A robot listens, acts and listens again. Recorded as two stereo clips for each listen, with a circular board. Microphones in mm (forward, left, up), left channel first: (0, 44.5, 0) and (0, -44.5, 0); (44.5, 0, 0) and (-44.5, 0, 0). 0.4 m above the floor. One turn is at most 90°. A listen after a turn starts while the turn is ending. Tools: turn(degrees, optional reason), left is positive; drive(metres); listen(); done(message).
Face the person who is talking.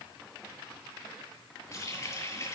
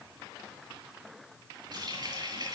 listen()
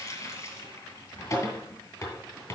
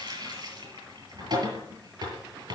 listen()
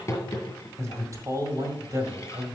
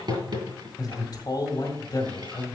turn(degrees=-40, reason="The man speaking: 40° right.")
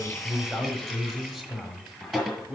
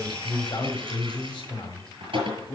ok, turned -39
done("Found it: a man speaking, straight ahead, 1 to 2 m away.")